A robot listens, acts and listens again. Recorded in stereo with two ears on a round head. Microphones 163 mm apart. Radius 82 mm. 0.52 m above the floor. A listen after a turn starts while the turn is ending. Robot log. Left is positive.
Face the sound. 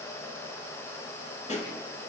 note: The pop: about 40° left or 140° left.
cmd yaw +40
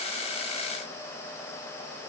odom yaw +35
cmd idle
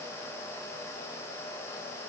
end: I heard a pop, but can't make it out now. It was about 5° left or 105° left.